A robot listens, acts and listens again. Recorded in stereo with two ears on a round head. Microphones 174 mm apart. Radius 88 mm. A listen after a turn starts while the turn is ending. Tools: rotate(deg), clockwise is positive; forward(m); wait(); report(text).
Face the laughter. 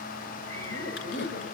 rotate(-60)
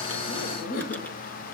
rotate(-55)
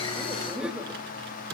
report("Facing the laughter, 2 to 4 m away.")